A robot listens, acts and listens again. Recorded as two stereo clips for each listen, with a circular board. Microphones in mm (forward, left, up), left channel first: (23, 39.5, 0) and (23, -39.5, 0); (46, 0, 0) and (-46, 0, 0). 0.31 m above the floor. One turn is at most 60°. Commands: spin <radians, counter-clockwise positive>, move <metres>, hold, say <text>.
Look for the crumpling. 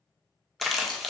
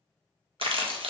spin 1.05
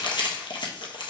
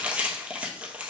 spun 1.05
spin 1.05
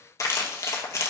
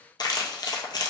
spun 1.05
spin 0.70
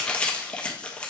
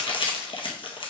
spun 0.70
spin 0.26
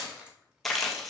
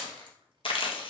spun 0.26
say Facing the crumpling, 1 to 2 m away.